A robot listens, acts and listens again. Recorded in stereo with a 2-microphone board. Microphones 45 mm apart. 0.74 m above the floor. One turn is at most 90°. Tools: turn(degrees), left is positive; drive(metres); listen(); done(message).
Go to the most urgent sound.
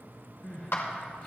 turn(degrees=35)
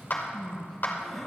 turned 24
turn(degrees=10)
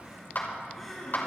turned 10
drive(metres=1.0)
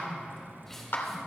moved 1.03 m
listen()
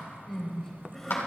turn(degrees=10)
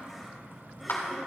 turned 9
listen()
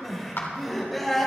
drive(metres=1.0)
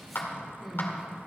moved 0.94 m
drive(metres=1.0)
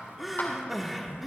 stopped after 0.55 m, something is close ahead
done("Arrived at the crying, straight ahead.")